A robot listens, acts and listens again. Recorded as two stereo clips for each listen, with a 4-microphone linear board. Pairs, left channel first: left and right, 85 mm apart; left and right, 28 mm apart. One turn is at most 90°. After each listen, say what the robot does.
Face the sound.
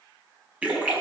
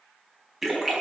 Turn 15° right.
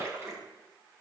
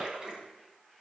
Turn 90° right.
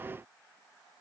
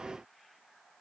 Turn 60° right.
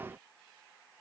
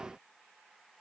Facing where the splash came from. I can't hear it now.